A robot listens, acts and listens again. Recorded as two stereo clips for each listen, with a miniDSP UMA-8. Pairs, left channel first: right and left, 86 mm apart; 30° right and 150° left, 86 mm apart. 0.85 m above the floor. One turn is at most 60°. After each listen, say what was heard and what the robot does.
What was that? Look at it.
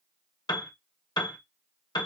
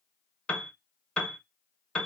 The piano: 105° right. Turn 60° right.
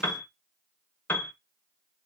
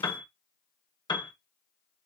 The piano is now 25° right. Turn 25° right.
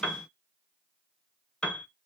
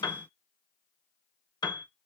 The piano is now 15° right. Turn 15° right.
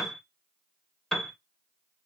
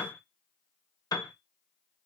Found it: a piano, straight ahead, under 1 m away.